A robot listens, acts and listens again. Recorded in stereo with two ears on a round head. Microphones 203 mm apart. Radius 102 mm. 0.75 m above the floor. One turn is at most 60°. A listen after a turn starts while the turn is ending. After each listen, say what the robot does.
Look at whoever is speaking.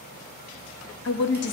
Turn 50° left.
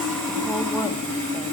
Keep listening.
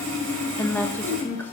Turn 10° left.
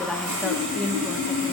Found it: a woman speaking, straight ahead, 1 to 2 m away.